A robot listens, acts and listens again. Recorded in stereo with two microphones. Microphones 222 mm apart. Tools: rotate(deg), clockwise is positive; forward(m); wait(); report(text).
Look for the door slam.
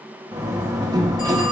rotate(15)
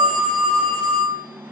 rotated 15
wait()
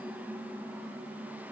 report("I heard a door slam, but can't make it out now. It was about straight ahead or 150° right.")